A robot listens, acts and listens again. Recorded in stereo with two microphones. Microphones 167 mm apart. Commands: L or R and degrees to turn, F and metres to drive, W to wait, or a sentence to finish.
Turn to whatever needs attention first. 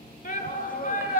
L55
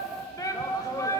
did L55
L25
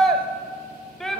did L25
Found it: a shout, straight ahead.